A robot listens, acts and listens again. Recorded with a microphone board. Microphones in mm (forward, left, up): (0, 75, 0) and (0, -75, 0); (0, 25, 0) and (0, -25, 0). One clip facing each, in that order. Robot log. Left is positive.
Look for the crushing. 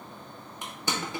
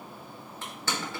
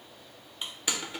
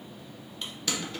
note: The crushing: about 15° left or 165° left.
cmd yaw +15
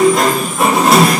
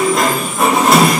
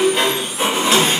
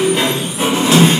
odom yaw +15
cmd idle
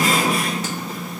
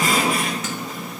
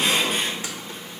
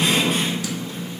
cmd idle
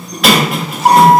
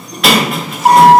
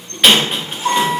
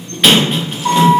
end: I heard crushing, but can't make it out now. It was about straight ahead or 150° left.